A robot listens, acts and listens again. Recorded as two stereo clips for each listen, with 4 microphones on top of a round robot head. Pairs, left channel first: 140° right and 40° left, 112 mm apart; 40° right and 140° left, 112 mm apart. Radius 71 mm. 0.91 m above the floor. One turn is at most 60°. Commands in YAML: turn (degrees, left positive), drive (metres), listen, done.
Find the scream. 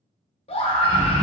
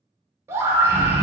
turn: -60
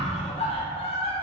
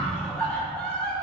turn: -60
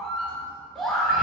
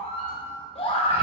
turn: -55
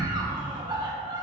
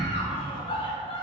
done: "Found it: a scream, straight ahead, 1 to 2 m away."